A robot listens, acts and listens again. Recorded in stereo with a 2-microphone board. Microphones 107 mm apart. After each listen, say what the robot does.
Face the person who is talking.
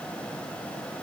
Keep listening.
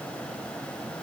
Keep listening.
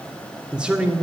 Turn 30° right.
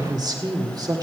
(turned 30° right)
Turn 140° right.
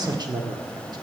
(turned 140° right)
Turn 45° right.
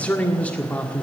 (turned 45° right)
Turn 15° left.
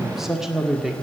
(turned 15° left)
Facing the man speaking.